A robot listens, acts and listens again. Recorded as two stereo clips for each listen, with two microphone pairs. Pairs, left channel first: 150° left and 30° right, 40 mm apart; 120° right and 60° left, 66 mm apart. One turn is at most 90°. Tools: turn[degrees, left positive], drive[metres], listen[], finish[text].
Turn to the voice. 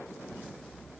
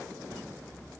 Action: listen[]
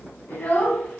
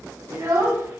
Thought: The child speaking: 110° left.
Action: turn[90]
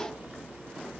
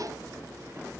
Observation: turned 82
Thought: Nothing new. It was at 30° left.
Action: turn[30]
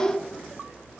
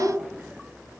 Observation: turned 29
Action: finish[Facing the child speaking, 1 to 2 m away.]